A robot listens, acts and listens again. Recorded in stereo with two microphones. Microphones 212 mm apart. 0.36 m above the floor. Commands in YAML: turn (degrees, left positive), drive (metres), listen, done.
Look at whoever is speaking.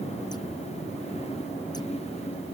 listen: true
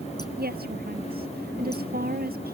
turn: -50
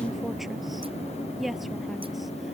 done: "Found it: a woman speaking, straight ahead."